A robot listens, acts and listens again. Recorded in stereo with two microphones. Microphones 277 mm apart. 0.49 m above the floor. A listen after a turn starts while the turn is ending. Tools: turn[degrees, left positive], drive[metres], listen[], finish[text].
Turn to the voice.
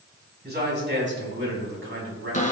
Thought: The man speaking: about 50° right or 130° right.
Action: turn[-50]
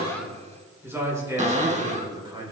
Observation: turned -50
Thought: So it is at 20° right.
Action: turn[-20]
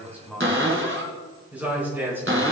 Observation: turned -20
Action: finish[Facing the man speaking, over 4 m away.]